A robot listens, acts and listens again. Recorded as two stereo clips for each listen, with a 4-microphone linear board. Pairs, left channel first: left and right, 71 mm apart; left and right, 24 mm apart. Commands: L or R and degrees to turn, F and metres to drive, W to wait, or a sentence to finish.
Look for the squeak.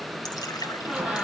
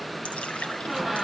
R30
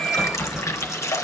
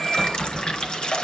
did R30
L20
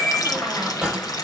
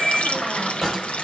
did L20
Facing the squeak, over 4 m away.